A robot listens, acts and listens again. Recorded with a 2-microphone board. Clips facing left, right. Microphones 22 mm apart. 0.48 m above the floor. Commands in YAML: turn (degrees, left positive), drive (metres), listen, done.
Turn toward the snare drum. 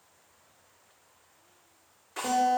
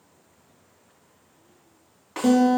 turn: -55
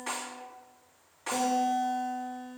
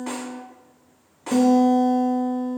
done: "Found it: a snare drum, straight ahead, 1 to 2 m away."